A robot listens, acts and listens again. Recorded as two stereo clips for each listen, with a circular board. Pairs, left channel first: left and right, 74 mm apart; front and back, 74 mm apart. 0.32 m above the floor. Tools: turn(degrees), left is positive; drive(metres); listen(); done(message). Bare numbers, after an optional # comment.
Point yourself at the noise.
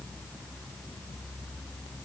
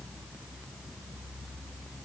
listen()
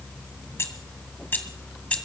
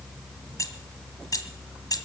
# The keys jangling: 20° left.
turn(20)
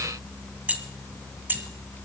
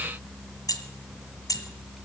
# The keys jangling is now 30° right.
turn(-30)
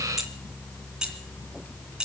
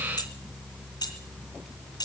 # The keys jangling is now 10° right.
turn(-10)
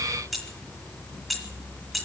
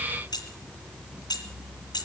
done("Facing the keys jangling.")